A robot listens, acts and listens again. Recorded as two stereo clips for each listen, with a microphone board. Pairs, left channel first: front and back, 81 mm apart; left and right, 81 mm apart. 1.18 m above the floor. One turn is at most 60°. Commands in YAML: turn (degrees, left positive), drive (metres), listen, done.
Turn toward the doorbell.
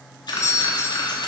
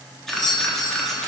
turn: 55
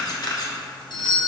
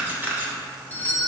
turn: 20
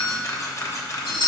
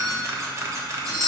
done: "Facing the doorbell."